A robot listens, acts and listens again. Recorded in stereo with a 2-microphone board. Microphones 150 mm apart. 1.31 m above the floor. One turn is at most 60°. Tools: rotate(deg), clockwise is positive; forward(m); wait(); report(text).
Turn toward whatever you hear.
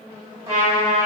rotate(45)
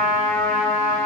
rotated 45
rotate(60)
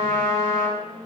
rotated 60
rotate(50)
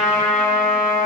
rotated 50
rotate(15)
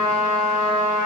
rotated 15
report("Found it: a trumpet, straight ahead.")